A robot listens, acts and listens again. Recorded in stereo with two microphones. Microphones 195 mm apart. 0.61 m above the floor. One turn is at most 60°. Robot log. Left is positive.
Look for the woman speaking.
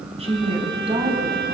note: The woman speaking: about 30° right or 150° right.
cmd yaw -30
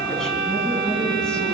cmd idle
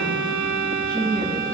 end: Facing the woman speaking.